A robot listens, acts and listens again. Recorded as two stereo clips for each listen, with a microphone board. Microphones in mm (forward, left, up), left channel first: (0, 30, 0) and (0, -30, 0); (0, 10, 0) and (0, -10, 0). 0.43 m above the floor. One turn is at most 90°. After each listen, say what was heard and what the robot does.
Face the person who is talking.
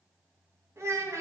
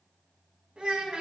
The child speaking: about 55° right or 125° right. Turn 55° right.
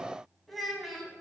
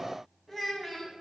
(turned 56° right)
Facing the child speaking.